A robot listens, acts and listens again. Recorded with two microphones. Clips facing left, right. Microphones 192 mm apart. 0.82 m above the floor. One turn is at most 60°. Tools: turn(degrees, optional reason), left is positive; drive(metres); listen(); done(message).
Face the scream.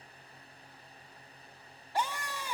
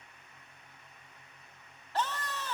turn(degrees=30)
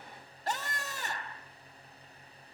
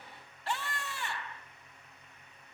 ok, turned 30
turn(degrees=60, reason="So it is at 135° left.")
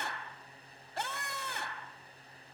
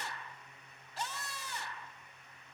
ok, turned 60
turn(degrees=60, reason="The scream is now 85° left.")
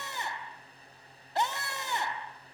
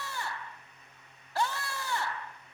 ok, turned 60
turn(degrees=25, reason="The scream is now 25° left.")
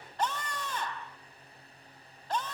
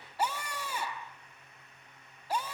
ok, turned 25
turn(degrees=-10, reason="The scream is now 10° right.")
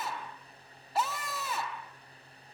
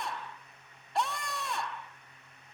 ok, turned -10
done("Found it: a scream, straight ahead.")